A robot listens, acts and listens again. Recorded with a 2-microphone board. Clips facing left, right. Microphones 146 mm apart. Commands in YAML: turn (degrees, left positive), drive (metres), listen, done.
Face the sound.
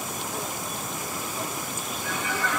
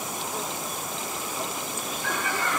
turn: -55
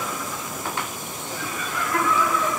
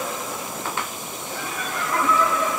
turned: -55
turn: -70
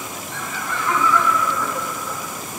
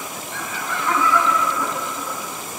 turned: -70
turn: -10
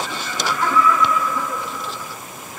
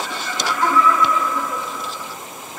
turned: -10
done: "Facing the laughter."